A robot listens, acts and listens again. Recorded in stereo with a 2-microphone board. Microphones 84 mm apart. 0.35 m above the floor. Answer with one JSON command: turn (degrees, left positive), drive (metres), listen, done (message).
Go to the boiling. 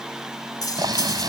{"turn": -60}
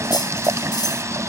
{"turn": -45}
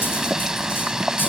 {"turn": -10}
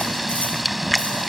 {"drive": 1.0}
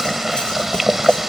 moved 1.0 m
{"drive": 1.0}
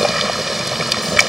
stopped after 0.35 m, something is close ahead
{"done": "I am next to the boiling."}